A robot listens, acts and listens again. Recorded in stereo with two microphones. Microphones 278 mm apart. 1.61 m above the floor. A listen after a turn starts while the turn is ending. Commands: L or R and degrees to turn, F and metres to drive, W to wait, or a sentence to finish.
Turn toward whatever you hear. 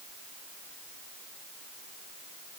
W
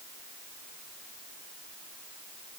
W
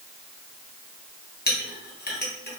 L35
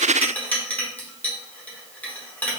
Found it: a clink, straight ahead.